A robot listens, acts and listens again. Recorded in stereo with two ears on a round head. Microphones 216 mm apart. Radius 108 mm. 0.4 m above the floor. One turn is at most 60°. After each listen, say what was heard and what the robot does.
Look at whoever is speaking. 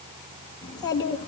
The child speaking: about 15° left or 165° left. Turn 15° left.
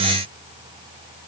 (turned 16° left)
Keep listening.
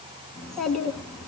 Found it: a child speaking, straight ahead, 2 to 4 m away.